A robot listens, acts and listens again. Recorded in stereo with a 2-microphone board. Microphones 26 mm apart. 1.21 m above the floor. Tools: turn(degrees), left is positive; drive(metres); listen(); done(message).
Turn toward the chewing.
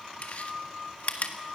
turn(degrees=65)
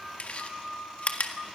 turn(degrees=50)
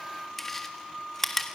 turn(degrees=10)
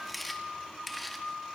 done("Found it: chewing, straight ahead, 1 to 2 m away.")